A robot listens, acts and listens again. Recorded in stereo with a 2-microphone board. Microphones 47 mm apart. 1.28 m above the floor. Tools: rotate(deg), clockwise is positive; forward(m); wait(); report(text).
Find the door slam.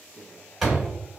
rotate(-30)
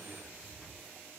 wait()
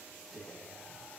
report("I heard a door slam, but can't make it out now. It was about 30° right or 150° left.")